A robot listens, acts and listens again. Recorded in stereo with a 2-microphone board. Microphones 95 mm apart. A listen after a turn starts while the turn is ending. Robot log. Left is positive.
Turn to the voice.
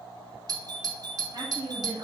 note: The woman speaking: about 45° right or 135° right.
cmd yaw -45
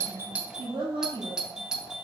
note: So it is at 90° right.
cmd yaw -90
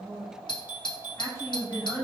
note: The woman speaking is now 30° left.
cmd yaw +30
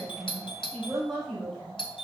end: Found it: a woman speaking, straight ahead, over 4 m away.